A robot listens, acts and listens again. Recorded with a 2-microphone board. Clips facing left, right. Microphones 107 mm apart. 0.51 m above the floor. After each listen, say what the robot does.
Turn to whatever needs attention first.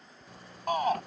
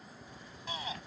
Turn 55° left.
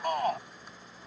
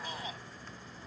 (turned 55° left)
Turn 60° left.
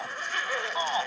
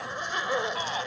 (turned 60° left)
Turn 25° left.
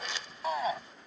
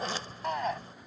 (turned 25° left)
Found it: a shout, straight ahead.